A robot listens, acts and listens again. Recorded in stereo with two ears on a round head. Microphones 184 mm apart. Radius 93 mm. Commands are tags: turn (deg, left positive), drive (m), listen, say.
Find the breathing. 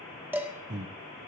<turn deg="-55"/>
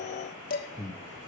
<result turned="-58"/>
<say>Found it: breathing, straight ahead, 1 to 2 m away.</say>